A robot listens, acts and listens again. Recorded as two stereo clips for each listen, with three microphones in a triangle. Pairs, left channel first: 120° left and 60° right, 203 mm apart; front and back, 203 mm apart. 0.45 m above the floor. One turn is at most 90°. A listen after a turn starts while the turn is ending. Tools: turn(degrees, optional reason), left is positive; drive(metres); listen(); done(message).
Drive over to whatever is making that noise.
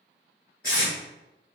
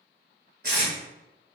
turn(degrees=90, reason="The tape being pulled: 145° left.")
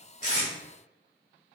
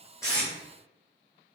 turn(degrees=55, reason="Nothing new. It was at 55° left.")
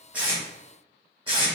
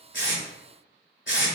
drive(metres=1.0)
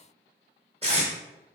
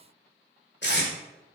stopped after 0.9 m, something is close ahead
turn(degrees=-10, reason="The tape being pulled is now 10° right.")
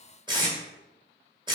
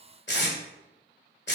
done("Arrived at the tape being pulled, straight ahead.")